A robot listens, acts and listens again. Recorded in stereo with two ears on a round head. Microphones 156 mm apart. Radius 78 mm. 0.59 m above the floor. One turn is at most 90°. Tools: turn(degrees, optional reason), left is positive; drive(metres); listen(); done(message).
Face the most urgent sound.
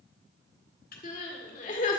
turn(degrees=45, reason="The crying: about 45° left or 135° left.")
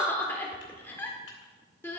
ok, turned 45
turn(degrees=15, reason="So it is at 15° left.")
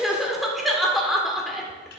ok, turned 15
done("Found it: crying, straight ahead.")